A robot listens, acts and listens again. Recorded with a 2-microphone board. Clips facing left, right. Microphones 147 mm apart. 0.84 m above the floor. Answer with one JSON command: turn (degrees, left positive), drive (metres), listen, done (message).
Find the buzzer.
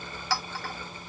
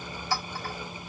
{"listen": true}
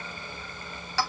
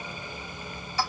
{"listen": true}
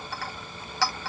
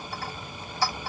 {"done": "I can't make out a buzzer, only a clink."}